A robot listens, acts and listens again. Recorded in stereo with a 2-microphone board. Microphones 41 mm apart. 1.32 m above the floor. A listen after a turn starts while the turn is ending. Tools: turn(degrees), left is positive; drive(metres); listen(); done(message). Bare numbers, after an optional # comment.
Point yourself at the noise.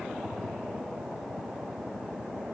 listen()
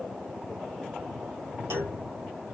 turn(-90)
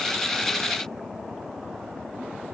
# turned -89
done("I heard a clunk from this way, but can't make it out now.")